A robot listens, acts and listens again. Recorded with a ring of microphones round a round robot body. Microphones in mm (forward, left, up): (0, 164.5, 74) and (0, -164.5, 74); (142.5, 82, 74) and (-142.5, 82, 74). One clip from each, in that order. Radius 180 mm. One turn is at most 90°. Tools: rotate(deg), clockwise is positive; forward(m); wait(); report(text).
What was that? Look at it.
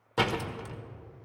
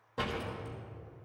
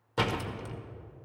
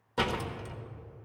rotate(-80)
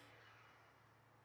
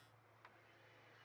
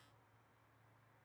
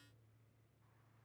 report("I heard a door slam from this way, but can't make it out now.")